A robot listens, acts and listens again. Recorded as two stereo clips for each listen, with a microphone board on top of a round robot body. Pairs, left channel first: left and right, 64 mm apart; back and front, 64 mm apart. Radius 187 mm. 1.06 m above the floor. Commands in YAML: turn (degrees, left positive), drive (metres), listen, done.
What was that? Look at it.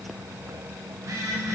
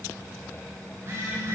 turn: -50
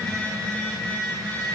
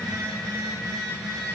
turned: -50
turn: 15
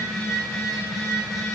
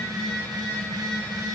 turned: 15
done: "Facing the phone buzzing."